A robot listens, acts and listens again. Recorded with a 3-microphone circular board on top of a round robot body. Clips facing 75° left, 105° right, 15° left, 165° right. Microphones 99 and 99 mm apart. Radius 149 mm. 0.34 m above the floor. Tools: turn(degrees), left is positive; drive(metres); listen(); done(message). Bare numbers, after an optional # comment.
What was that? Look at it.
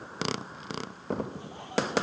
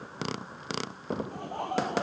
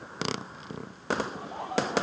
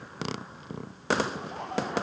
# The laughter: 70° right.
turn(-70)
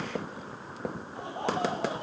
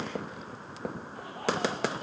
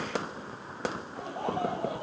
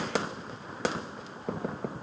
# The laughter is now 10° left.
turn(10)
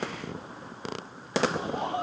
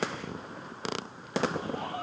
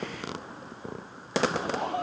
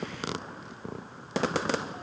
# The laughter is now 10° left.
turn(10)
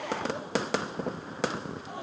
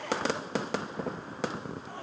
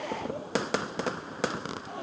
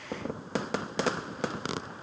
done("Found it: laughter, straight ahead.")